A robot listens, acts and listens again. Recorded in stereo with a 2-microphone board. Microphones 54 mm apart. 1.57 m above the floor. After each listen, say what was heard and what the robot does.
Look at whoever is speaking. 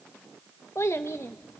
The child speaking: about 55° left or 125° left. Turn 55° left.
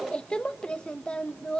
So it is at 20° left. Turn 20° left.
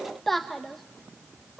Facing the child speaking, 1 to 2 m away.